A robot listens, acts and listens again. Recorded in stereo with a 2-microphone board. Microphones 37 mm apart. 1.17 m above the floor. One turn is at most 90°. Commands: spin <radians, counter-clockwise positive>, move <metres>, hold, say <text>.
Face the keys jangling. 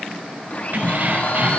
spin -0.96
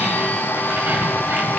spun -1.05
hold
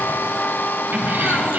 hold
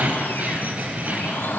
spin -0.87
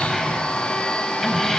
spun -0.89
say Facing the keys jangling, over 4 m away.